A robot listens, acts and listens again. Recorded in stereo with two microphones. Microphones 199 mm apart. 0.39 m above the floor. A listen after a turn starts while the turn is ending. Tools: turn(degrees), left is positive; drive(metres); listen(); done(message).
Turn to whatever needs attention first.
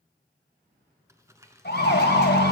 turn(degrees=55)
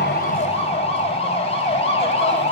turn(degrees=40)
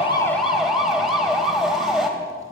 done("Facing the siren, 2 to 4 m away.")